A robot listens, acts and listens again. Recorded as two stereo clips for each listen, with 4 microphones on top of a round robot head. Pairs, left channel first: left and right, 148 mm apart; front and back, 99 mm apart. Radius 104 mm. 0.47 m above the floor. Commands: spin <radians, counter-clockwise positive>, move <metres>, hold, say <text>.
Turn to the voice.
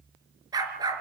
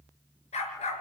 hold
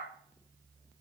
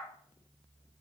hold
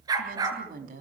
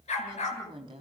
spin -2.27
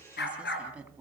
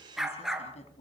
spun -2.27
hold
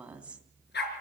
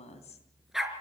spin -0.17
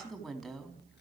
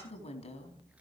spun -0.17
say Found it: a woman speaking, straight ahead, 2 to 4 m away.